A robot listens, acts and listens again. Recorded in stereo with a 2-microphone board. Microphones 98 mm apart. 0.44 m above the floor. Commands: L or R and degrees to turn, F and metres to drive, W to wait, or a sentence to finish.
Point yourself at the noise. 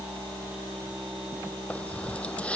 L30
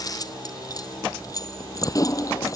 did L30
L145
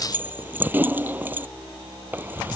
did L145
R20
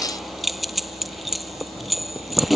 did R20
Facing the keys jangling.